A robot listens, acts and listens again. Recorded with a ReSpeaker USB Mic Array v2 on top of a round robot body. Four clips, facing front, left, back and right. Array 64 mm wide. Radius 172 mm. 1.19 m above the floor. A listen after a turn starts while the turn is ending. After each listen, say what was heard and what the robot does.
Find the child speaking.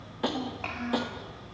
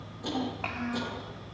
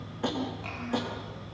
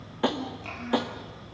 The child speaking: 60° left. Turn 60° left.
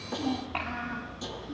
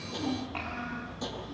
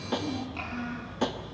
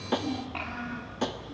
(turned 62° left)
Found it: a child speaking, straight ahead.